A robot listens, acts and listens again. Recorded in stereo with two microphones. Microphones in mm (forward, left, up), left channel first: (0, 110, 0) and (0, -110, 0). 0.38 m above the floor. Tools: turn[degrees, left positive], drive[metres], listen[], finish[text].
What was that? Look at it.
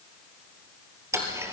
Action: turn[-30]
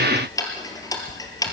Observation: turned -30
Thought: So it is at 15° left.
Action: turn[15]
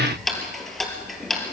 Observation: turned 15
Action: finish[Found it: ticking, straight ahead.]